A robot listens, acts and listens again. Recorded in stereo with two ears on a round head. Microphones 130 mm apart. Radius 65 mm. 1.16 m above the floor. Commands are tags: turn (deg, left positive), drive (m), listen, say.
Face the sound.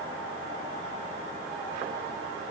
<listen/>
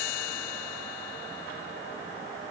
<listen/>
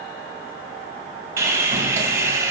<turn deg="-20"/>
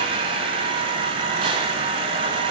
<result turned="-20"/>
<turn deg="-140"/>
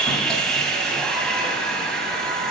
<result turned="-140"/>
<say>Found it: sawing, straight ahead, 1 to 2 m away.</say>